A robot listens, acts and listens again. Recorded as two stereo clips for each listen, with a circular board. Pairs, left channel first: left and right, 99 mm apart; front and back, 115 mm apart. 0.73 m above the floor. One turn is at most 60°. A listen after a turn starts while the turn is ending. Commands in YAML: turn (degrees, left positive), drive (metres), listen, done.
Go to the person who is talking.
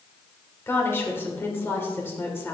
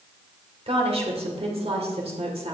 turn: 60
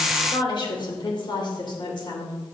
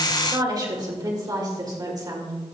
turn: 60
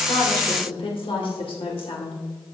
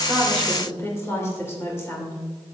turn: 60
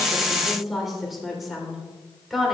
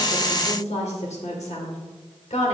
drive: 1.0
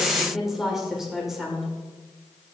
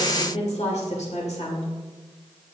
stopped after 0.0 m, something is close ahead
done: "Blocked. The woman speaking is further on, straight ahead."